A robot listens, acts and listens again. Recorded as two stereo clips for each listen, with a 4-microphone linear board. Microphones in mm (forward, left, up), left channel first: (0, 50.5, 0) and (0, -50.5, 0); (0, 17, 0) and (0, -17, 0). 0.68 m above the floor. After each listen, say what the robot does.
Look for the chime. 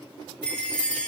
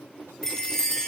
Turn 30° left.
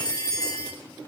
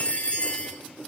Turn 140° left.
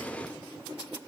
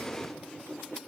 Keep listening.
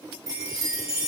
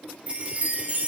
Turn 40° right.
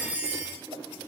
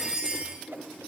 Turn 20° right.
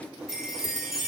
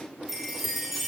Facing the chime, over 4 m away.